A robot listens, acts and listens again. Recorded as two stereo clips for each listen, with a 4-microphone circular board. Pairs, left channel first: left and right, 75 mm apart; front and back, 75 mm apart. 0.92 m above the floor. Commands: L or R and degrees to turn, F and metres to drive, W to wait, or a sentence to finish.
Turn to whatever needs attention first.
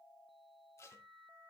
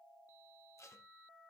W
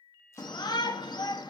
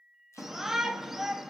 L95
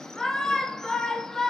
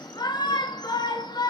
L10
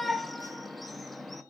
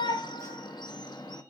Found it: a shout, straight ahead.